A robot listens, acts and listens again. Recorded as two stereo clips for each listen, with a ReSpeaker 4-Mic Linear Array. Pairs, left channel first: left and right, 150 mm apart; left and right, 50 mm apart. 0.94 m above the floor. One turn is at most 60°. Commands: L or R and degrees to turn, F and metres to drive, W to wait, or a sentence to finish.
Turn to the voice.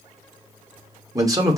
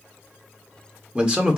R25
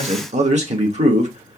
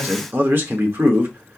R60
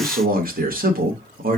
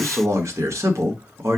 R60
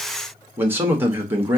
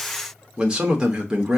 R15
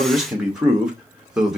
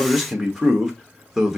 Facing the man speaking, 1 to 2 m away.